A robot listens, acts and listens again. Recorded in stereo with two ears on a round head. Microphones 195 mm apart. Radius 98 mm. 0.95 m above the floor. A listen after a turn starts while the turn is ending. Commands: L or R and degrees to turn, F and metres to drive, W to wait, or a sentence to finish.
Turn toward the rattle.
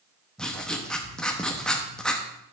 W
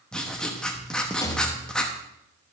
L15
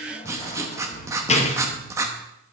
L150
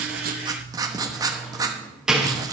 Facing the rattle.